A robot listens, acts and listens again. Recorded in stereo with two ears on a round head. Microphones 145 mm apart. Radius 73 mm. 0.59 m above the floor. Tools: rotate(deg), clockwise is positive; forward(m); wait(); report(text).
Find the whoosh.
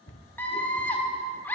wait()
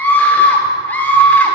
wait()
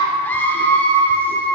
report("I can't make out a whoosh, only a scream and a cupboard door.")